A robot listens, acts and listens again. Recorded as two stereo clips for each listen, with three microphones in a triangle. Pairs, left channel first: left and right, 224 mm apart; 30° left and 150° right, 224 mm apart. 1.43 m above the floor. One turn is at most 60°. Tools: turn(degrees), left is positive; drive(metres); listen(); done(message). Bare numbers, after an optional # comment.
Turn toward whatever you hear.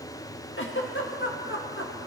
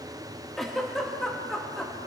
# The giggle: 120° left.
turn(60)
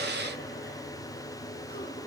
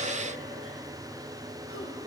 # Nothing new. It was at 60° left.
turn(60)
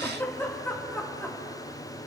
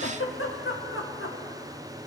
# The giggle is now 10° left.
turn(10)
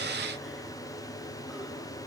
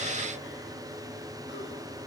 listen()
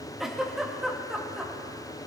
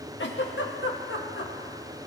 done("Found it: a giggle, straight ahead, 1 to 2 m away.")